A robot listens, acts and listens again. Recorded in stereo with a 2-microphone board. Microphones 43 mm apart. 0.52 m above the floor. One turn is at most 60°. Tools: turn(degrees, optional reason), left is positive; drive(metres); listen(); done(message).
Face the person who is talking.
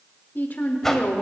turn(degrees=45, reason="The woman speaking: about 45° left or 135° left.")
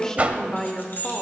turn(degrees=15, reason="So it is at 15° left.")
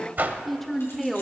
done("Facing the woman speaking.")